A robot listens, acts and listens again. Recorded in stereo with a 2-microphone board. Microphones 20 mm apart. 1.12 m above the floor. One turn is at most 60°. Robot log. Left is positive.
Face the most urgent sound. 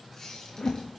cmd idle
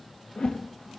cmd idle
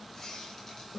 end: I can't make out anything urgent to turn to.